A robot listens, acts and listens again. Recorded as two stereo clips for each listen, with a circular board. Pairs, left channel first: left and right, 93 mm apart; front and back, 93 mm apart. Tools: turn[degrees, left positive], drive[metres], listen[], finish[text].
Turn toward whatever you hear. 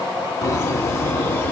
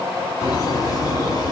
Thought: The laughter: 25° left.
Action: turn[25]
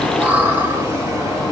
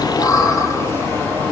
Thought: The laughter is now 65° right.
Action: turn[-65]
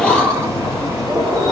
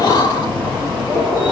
Thought: The laughter is now 70° right.
Action: turn[-70]
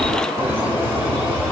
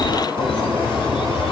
Thought: The laughter is now 25° right.
Action: turn[-25]
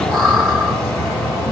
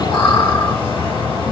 Action: finish[Facing the laughter.]